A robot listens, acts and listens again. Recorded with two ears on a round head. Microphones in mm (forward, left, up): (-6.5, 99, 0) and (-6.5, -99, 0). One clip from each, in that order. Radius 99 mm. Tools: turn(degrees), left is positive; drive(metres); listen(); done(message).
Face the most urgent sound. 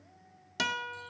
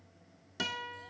listen()
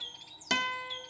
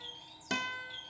listen()
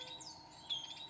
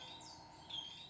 done("I can't make out anything urgent, only a bird and a guitar.")